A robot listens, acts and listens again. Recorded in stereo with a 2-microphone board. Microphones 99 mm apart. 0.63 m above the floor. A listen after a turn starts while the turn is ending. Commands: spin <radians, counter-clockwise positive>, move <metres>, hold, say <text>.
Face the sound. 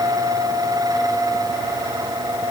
hold
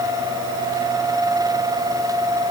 hold
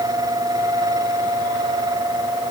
say I can't make out anything to turn to.